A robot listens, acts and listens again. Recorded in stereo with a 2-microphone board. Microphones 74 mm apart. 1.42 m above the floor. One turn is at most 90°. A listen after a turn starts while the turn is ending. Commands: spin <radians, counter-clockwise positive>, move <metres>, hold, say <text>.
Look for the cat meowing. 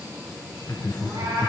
spin -0.87
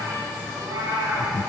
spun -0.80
spin -1.40
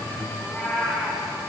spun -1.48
say Facing the cat meowing, over 4 m away.